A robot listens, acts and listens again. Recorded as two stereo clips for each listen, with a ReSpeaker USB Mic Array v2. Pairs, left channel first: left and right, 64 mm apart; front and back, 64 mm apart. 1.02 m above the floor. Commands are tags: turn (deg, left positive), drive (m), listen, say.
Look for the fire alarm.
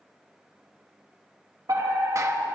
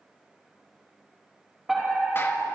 <turn deg="-95"/>
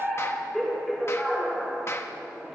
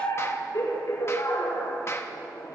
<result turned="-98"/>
<say>Facing the fire alarm, over 4 m away.</say>